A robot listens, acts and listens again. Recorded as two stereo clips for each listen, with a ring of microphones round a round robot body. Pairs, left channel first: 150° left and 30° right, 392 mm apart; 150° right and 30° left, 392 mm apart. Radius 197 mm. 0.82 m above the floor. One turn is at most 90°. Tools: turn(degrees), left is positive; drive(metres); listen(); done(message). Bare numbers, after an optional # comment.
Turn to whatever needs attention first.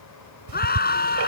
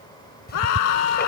# The scream: 140° right.
turn(-90)
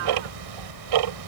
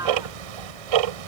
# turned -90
# Nothing new. It was at 50° right.
turn(-50)
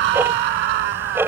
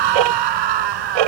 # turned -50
done("Found it: a scream, straight ahead.")